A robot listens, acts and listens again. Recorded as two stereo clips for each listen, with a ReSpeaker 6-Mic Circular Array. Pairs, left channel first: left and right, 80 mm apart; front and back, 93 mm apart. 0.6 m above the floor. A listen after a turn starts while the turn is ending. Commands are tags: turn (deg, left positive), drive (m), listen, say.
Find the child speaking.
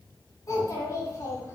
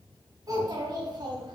<turn deg="140"/>
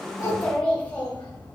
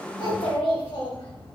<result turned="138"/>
<turn deg="20"/>
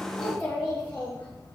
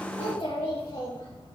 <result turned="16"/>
<turn deg="25"/>
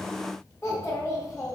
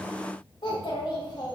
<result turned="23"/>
<turn deg="30"/>
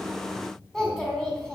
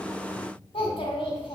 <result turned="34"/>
<say>Facing the child speaking.</say>